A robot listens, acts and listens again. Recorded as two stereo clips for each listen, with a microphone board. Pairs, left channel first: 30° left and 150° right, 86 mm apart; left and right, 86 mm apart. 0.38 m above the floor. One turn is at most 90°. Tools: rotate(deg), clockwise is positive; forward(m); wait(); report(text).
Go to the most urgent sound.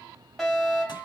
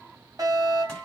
rotate(55)
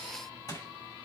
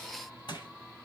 wait()
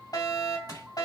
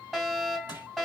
forward(1.0)
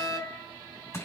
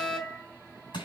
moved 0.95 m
forward(1.0)
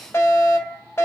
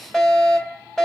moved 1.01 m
rotate(-15)
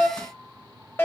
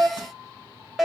forward(1.0)
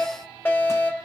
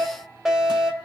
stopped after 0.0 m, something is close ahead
rotate(10)
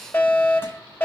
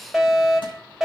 report("I am next to the fire alarm.")